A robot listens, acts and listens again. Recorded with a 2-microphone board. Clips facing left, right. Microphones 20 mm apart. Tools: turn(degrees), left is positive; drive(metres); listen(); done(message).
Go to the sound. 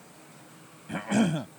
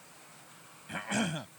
turn(degrees=30)
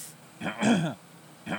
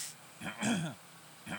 turn(degrees=155)
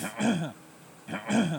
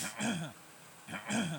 turn(degrees=15)
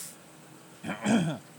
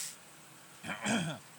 drive(metres=1.0)
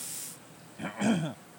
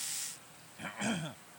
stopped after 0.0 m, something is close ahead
done("Something is in my way. I am facing the cough but have not reached it.")